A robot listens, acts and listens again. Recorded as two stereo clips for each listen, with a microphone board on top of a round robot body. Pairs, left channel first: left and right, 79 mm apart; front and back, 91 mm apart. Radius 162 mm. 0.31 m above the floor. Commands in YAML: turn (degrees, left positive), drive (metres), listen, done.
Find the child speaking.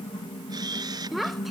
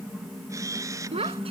turn: -175
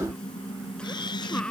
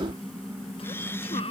turn: 10
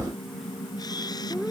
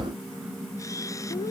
listen: true
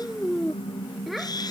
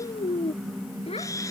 done: "Found it: a child speaking, straight ahead."